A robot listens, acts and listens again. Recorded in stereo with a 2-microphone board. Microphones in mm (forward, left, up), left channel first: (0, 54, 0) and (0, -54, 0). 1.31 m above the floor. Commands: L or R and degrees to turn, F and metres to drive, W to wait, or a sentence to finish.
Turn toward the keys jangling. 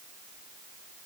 W
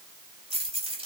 R60
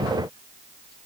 W
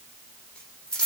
L10
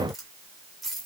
Facing the keys jangling, over 4 m away.